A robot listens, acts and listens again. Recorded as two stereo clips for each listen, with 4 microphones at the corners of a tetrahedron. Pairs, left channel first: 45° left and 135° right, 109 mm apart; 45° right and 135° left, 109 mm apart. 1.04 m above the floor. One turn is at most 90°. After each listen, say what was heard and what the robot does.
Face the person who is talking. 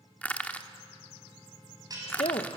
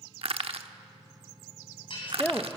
The woman speaking: 30° left. Turn 30° left.
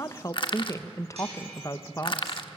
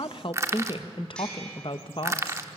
The woman speaking is now 15° right. Turn 15° right.
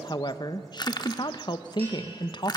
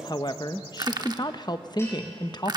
Found it: a woman speaking, straight ahead, under 1 m away.